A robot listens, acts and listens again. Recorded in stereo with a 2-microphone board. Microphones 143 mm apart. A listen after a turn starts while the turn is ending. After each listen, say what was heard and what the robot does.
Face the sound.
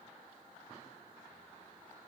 Keep listening.
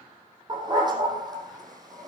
The dog barking: about 30° right or 150° right. Turn 30° right.
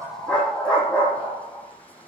So it is at 10° left. Turn 10° left.
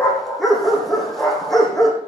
Facing the dog barking.